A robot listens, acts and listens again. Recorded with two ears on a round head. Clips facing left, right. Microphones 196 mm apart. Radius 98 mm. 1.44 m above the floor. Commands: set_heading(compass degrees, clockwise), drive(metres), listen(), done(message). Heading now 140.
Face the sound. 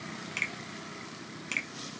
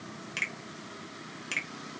set_heading(170)
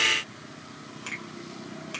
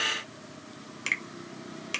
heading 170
set_heading(310)
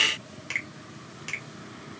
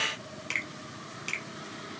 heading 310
done("Found it: a finger snap, straight ahead.")